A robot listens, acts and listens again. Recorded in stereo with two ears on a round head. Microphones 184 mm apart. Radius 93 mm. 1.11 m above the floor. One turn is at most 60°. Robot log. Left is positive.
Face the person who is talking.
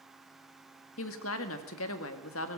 note: The woman speaking: about 70° left or 110° left.
cmd yaw +60
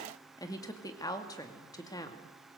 note: So it is at 20° left.
cmd yaw +20
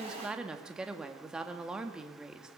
end: Found it: a woman speaking, straight ahead, 2 to 4 m away.